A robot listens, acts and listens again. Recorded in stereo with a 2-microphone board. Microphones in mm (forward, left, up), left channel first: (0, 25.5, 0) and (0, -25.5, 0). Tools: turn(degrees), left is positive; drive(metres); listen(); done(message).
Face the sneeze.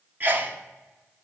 turn(degrees=-40)
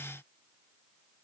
listen()
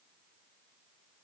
done("I heard a sneeze, but can't make it out now. It was about straight ahead or 100° right.")